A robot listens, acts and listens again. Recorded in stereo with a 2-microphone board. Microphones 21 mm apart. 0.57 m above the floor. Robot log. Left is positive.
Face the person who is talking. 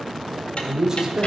note: The man speaking: about 25° right or 155° right.
cmd yaw -25
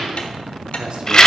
note: So it is at 125° right.
cmd yaw -125
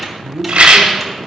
note: The man speaking is now 35° right.
cmd yaw -35
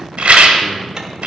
cmd idle
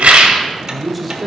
end: Found it: a man speaking, straight ahead, 1 to 2 m away.